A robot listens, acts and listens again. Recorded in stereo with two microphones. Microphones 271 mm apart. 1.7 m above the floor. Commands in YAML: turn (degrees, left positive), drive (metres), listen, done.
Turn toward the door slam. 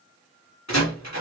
turn: 90
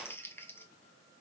done: "I heard a door slam from this way, but can't make it out now."